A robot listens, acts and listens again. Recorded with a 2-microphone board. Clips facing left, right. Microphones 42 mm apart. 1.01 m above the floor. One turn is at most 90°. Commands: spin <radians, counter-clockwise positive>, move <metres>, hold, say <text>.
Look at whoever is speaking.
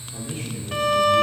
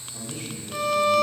spin 0.87
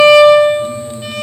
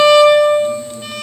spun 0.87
hold
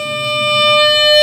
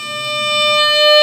hold
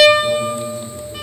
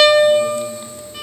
say I heard a man speaking, but can't make it out now. It was about straight ahead or 80° left.